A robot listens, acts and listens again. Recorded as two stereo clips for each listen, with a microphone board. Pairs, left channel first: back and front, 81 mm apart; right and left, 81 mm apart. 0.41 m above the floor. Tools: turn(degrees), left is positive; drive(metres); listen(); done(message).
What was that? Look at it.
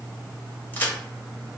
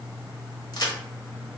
turn(degrees=-115)
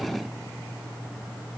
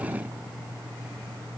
done("Facing where the crack came from. I can't hear it now.")